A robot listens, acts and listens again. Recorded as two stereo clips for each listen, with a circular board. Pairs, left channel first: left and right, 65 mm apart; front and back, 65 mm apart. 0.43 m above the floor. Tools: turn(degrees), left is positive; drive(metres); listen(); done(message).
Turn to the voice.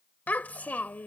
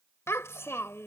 turn(degrees=30)
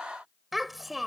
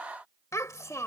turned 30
done("Found it: a child speaking, straight ahead.")